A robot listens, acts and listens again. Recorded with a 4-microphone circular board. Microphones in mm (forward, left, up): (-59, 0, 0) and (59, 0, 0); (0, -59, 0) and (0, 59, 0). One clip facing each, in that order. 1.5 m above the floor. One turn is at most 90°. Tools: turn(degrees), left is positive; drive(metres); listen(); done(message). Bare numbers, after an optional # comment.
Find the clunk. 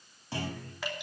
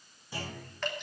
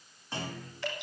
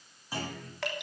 # The clunk: 175° left.
turn(90)
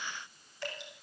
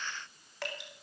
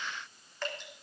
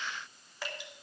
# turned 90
# Nothing new. It was at 85° left.
turn(85)
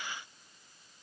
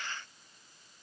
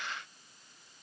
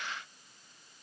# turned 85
done("I heard a clunk from this way, but can't make it out now.")